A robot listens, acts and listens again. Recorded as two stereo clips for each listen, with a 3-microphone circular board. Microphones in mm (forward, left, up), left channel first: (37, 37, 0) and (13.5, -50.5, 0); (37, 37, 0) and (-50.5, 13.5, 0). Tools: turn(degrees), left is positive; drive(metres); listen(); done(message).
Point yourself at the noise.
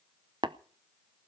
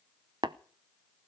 turn(degrees=-135)
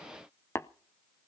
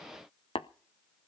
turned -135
turn(degrees=10)
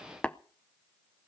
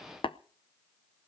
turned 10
done("Found it: tapping, straight ahead.")